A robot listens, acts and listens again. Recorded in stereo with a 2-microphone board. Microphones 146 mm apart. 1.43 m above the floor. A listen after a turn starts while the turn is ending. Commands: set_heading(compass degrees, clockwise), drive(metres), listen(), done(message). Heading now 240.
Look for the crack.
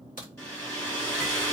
set_heading(150)
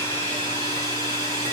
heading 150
done("Facing where the crack came from. I can't hear it now.")